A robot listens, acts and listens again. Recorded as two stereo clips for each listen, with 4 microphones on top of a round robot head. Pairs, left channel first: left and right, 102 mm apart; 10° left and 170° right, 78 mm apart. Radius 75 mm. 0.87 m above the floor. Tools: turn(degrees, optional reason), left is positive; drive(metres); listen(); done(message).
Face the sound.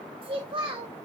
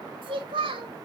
turn(degrees=-140, reason="The child speaking: 140° right.")
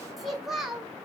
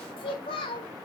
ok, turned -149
done("Facing the child speaking, 1 to 2 m away.")